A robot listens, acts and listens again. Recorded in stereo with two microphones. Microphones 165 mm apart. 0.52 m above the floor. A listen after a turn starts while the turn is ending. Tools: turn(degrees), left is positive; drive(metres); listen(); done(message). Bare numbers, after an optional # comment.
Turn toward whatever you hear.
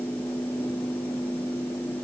listen()
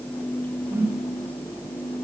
turn(-30)
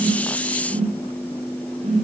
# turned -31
# So it is at 135° right.
turn(-135)
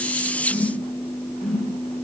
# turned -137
done("Found it: a whoosh, straight ahead, 1 to 2 m away.")